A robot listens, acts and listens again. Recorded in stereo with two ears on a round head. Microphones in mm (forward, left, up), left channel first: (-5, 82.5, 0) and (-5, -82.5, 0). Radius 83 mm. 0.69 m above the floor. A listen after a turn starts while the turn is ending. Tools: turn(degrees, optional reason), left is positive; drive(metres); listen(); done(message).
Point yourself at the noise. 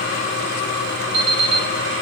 turn(degrees=-65, reason="The alarm clock: about 65° right or 115° right.")
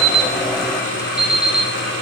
done("Found it: an alarm clock, straight ahead, 2 to 4 m away.")